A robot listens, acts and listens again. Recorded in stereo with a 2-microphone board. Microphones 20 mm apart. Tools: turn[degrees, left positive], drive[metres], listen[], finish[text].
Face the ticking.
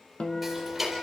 Action: turn[-30]
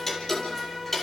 Thought: So it is at 15° left.
Action: turn[15]
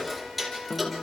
Action: finish[Found it: ticking, straight ahead, 2 to 4 m away.]